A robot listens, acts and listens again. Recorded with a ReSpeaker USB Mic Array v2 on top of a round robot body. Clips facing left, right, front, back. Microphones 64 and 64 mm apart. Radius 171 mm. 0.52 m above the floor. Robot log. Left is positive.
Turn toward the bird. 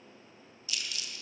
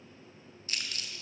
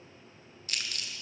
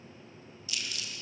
cmd idle
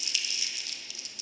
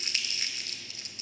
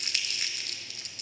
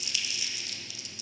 cmd idle
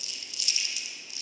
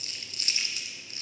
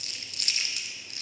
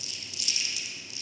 end: I can't make out a bird to turn to.